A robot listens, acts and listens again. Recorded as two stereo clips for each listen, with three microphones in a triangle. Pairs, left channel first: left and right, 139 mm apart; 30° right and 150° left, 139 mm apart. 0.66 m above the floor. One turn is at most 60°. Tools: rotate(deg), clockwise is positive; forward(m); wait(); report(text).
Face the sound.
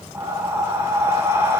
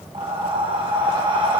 rotate(60)
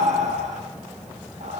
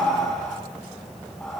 rotate(60)
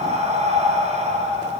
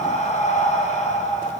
rotate(60)
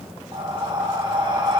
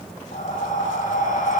rotate(35)
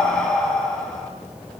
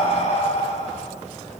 report("Facing the breathing.")